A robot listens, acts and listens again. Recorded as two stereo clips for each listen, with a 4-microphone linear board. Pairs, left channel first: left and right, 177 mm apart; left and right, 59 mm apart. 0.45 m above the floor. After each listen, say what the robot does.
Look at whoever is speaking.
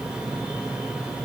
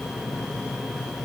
Keep listening.
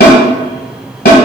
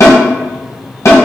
Keep listening.
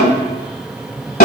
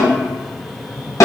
I can't make out anyone speaking to turn to.